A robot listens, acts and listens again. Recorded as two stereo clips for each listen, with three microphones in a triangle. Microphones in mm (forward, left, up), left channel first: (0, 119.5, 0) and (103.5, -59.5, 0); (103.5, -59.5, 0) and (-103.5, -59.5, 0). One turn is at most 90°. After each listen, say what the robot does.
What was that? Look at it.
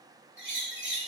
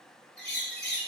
Turn 30° right.
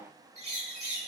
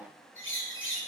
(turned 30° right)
Found it: a bird, straight ahead.